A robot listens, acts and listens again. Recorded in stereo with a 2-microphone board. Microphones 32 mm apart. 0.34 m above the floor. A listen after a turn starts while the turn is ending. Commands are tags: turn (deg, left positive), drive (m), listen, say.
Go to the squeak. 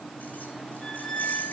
<turn deg="20"/>
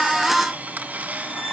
<listen/>
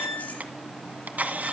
<drive m="1.0"/>
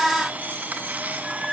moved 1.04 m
<drive m="1.0"/>
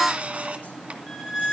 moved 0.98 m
<drive m="1.0"/>
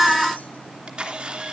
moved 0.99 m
<listen/>
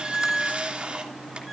<drive m="1.0"/>
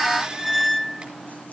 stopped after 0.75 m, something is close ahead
<say>Arrived at the squeak, straight ahead.</say>